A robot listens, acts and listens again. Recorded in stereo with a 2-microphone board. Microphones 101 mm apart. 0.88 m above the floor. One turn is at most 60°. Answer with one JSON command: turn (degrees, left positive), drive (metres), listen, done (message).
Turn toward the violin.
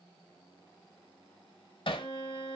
{"turn": 45}
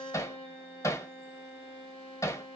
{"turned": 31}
{"turn": 60}
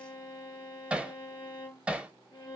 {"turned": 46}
{"turn": 55}
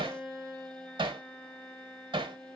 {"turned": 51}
{"done": "Facing the violin."}